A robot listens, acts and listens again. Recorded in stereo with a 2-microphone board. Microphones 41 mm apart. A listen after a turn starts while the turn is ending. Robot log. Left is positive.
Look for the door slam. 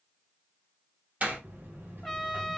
note: The door slam: about 40° right or 140° right.
cmd yaw -40
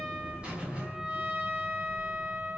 cmd idle
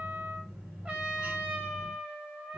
end: I heard a door slam, but can't make it out now. It was about straight ahead or 100° right.